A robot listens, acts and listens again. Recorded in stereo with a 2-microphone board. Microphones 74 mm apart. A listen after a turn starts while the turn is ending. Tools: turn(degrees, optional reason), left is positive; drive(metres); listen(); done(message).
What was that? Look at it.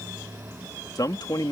turn(degrees=65, reason="The man speaking: about 65° left or 115° left.")
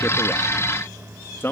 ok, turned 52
turn(degrees=35, reason="So it is at 35° left.")
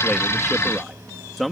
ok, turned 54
done("Facing the man speaking.")